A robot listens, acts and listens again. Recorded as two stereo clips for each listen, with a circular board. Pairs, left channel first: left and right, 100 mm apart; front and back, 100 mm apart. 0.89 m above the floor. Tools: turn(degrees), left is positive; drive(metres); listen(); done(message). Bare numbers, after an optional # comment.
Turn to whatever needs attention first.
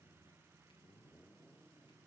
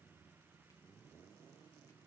listen()
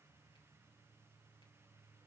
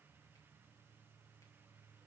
listen()
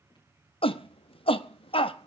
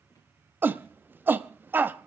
# The shout: 110° left.
turn(110)
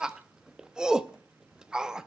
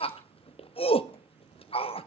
# The shout is now 10° right.
turn(-10)
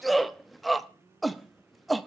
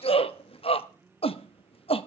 done("Found it: a shout, straight ahead.")